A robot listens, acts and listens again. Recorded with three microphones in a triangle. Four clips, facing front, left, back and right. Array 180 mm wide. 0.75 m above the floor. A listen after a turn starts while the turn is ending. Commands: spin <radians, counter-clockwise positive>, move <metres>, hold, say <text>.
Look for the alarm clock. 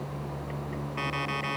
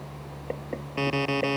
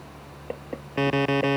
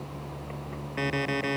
spin 2.97
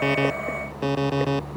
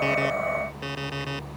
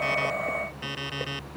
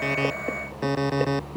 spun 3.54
spin -0.52
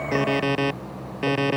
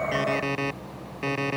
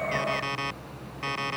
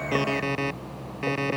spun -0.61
say Facing the alarm clock.